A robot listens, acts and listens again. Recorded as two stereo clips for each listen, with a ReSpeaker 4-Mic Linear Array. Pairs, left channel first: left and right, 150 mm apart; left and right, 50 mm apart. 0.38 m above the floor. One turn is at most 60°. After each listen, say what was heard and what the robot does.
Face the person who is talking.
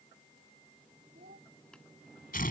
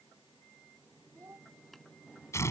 Turn 60° right.
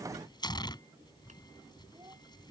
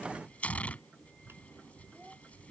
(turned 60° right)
Nothing new. It was at 30° right. Turn 30° right.
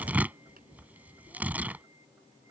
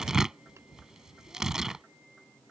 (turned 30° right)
Keep listening.
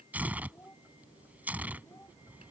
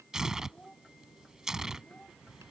The child speaking is now 15° left. Turn 15° left.
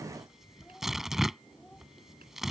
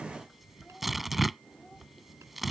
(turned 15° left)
Keep listening.
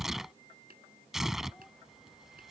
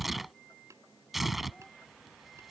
Keep listening.
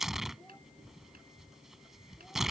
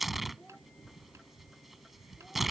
Facing where the child speaking came from. I can't hear it now.